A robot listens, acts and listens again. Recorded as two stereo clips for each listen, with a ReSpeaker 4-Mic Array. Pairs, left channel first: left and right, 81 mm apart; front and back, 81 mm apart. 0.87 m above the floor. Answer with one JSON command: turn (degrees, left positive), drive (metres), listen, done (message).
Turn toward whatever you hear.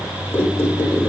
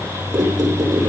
{"turn": 150}
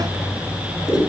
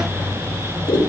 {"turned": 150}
{"done": "Facing the squeak, 1 to 2 m away."}